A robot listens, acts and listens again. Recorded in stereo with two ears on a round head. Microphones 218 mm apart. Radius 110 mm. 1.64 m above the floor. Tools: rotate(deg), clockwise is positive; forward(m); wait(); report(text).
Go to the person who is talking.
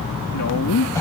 rotate(-90)
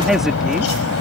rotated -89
wait()
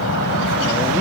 wait()
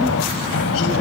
report("I heard a woman speaking from this way, but can't make it out now. I did not reach it.")